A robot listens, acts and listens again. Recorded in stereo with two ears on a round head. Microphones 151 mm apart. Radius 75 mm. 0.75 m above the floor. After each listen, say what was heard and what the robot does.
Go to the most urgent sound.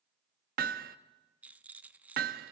Keep listening.
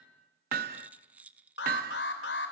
The alarm: about 70° left or 110° left. Turn 70° left.
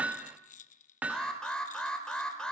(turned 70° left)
Drive 1.0 m forward.
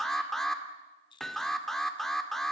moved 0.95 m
Drive 1.0 m forward.
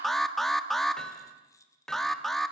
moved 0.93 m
Drive 1.0 m forward.
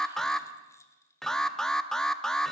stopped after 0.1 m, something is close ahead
I am next to the alarm.